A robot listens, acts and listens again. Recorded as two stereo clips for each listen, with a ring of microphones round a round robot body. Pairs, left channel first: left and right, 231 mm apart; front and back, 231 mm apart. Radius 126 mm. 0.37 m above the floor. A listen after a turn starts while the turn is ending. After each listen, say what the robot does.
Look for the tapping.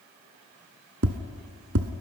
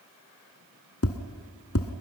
Turn 40° right.
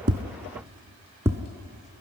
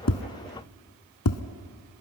Turn 10° right.
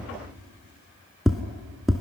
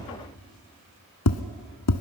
Facing the tapping, under 1 m away.